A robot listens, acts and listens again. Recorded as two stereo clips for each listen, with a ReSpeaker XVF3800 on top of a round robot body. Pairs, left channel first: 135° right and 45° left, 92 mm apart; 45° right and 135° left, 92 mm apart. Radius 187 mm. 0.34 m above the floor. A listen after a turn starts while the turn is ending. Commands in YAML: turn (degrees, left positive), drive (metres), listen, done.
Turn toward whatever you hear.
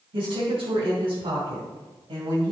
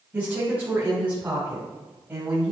turn: 65
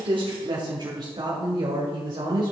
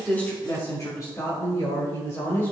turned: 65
turn: 15
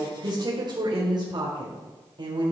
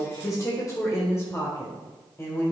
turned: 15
turn: 15
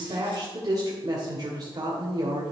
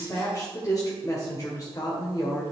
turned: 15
done: "Facing the woman speaking, 1 to 2 m away."